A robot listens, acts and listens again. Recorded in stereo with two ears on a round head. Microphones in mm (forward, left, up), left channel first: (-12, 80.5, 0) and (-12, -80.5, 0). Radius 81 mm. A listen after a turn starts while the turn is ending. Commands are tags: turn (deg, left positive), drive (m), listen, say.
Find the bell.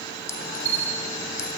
<turn deg="-30"/>
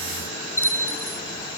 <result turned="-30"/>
<turn deg="15"/>
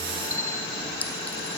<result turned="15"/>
<listen/>
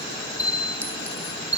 <turn deg="-10"/>
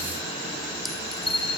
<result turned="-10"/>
<say>Found it: a bell, straight ahead.</say>